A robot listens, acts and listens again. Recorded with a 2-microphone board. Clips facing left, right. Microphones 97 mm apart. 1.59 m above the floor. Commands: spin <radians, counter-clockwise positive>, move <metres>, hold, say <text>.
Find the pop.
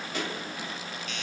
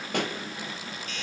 spin -1.13
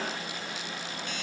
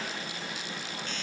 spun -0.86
hold
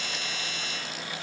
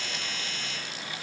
say I heard a pop, but can't make it out now. It was about 15° right or 70° right.